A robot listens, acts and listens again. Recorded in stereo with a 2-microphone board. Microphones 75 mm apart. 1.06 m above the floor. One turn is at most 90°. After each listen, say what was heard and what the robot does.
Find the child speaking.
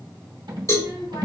Turn 90° left.
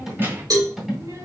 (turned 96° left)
So it is at 45° right. Turn 45° right.
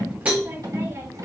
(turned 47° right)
The child speaking is now 40° right. Turn 40° right.
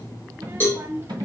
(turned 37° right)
The child speaking is now 30° right. Turn 30° right.
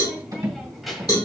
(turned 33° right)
Facing the child speaking, 1 to 2 m away.